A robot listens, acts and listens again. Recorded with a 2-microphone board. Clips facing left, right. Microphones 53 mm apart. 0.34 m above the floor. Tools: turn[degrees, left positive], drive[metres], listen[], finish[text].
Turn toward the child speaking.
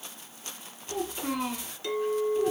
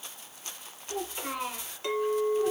Action: turn[-30]
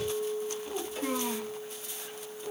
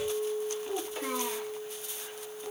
Thought: The child speaking: about 20° right or 160° right.
Action: turn[-20]
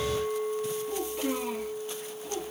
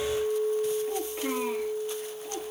Thought: So it is at 145° right.
Action: turn[-145]
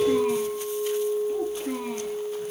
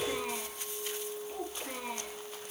Action: finish[Found it: a child speaking, straight ahead.]